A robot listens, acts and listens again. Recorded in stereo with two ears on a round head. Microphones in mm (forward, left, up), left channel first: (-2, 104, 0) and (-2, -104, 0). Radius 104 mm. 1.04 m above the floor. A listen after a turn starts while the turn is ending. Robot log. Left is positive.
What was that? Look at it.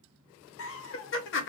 note: The laughter: about 50° left or 130° left.
cmd yaw +50
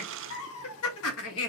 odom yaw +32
note: The laughter: about 65° left or 115° left.
cmd yaw +65
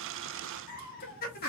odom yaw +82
note: So it is at 40° left.
cmd yaw +40
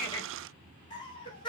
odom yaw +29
note: The laughter is now 20° left.
cmd yaw +20
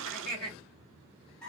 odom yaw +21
end: Facing the laughter.